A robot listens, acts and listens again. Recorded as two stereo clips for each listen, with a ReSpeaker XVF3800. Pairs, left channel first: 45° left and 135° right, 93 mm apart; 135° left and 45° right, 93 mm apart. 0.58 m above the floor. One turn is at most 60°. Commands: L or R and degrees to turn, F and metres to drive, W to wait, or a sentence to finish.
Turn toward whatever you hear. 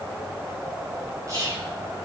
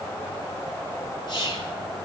L60
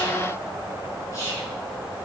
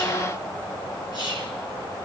L60
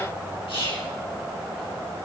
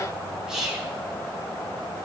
L35
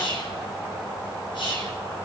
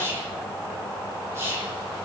L15
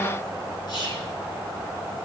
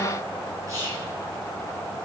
L10
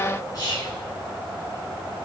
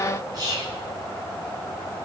Facing the whispering.